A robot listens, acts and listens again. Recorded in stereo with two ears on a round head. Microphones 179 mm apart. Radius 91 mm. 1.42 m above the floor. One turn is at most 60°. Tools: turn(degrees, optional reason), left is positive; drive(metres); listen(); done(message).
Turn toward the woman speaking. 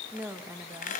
turn(degrees=-30)
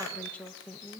turn(degrees=30)
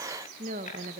turn(degrees=-45, reason="So it is at 45° right.")
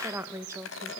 turn(degrees=-15, reason="The woman speaking is now 15° right.")
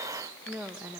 turn(degrees=-10, reason="The woman speaking is now 10° right.")
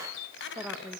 done("Found it: a woman speaking, straight ahead, 2 to 4 m away.")